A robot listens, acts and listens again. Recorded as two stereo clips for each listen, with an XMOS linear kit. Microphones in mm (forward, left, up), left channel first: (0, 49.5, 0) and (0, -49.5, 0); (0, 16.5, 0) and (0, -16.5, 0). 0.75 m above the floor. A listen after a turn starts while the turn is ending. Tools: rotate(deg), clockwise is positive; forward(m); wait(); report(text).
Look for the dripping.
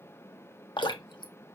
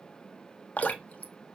rotate(-50)
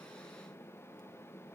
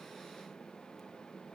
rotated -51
wait()
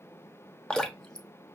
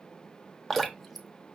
rotate(-10)
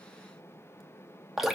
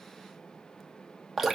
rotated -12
report("Facing the dripping, under 1 m away.")